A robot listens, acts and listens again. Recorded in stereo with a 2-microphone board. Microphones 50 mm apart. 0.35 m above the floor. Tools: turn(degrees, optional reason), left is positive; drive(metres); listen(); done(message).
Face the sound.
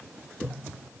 listen()
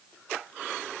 listen()
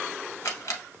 turn(degrees=90)
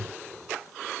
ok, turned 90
listen()
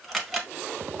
done("Found it: a camera shutter, straight ahead.")